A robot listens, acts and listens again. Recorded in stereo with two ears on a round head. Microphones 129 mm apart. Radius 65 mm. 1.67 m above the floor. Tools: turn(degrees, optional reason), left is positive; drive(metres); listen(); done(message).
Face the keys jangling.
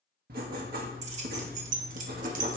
turn(degrees=-65, reason="The keys jangling: about 65° right or 115° right.")
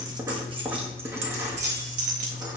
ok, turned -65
turn(degrees=-55, reason="So it is at 55° right.")
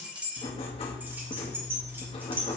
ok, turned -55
turn(degrees=-15, reason="The keys jangling is now 15° right.")
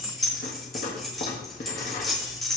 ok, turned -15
done("Facing the keys jangling, 2 to 4 m away.")